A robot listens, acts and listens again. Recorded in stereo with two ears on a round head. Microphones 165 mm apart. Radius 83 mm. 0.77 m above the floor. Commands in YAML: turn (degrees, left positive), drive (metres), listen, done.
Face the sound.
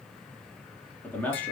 turn: 30
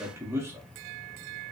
turn: -15
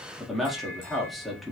done: "Found it: a man speaking, straight ahead."